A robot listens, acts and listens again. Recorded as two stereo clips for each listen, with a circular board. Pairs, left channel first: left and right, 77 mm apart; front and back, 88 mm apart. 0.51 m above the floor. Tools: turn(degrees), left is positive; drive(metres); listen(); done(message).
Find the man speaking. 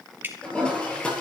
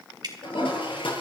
listen()
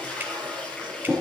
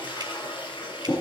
listen()
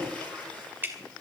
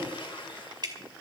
done("I can't make out a man speaking to turn to.")